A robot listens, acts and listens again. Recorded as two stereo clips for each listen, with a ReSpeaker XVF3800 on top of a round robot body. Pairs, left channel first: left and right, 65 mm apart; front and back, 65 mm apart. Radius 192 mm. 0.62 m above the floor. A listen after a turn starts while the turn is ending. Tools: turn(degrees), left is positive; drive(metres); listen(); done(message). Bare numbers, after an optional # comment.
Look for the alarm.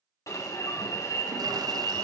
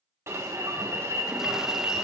# The alarm: 130° left.
turn(130)
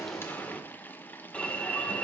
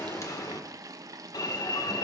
# The alarm is now 20° left.
turn(20)
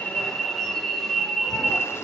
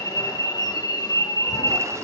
# The alarm is now 10° left.
turn(10)
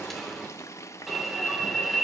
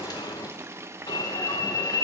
done("Found it: an alarm, straight ahead, 1 to 2 m away.")